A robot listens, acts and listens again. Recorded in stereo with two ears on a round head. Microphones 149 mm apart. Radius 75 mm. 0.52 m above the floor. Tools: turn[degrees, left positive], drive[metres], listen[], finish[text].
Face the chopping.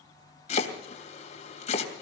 Thought: The chopping: about 40° left or 140° left.
Action: turn[40]
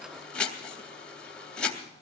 Action: finish[Found it: chopping, straight ahead.]